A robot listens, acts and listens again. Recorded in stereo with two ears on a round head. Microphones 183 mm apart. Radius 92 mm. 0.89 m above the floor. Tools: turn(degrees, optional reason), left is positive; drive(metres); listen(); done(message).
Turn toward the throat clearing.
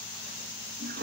listen()
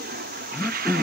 turn(degrees=30)
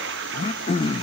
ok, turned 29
turn(degrees=145, reason="So it is at 145° left.")
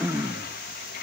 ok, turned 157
turn(degrees=-10, reason="The throat clearing is now 10° right.")
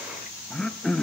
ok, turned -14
done("Found it: throat clearing, straight ahead, under 1 m away.")